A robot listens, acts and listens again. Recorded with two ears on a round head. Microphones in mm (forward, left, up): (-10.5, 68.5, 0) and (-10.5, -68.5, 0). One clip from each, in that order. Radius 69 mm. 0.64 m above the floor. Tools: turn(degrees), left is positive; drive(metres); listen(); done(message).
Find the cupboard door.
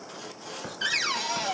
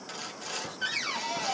turn(degrees=45)
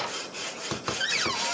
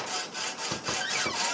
turn(degrees=85)
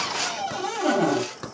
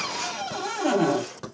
turn(degrees=-10)
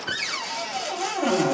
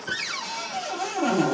done("Found it: a cupboard door, straight ahead, 1 to 2 m away.")